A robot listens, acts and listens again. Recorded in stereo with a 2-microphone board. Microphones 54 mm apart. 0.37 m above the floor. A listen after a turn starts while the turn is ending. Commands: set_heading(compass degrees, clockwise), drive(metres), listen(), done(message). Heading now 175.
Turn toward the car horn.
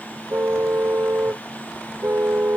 set_heading(215)
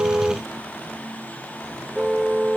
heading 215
done("Facing the car horn.")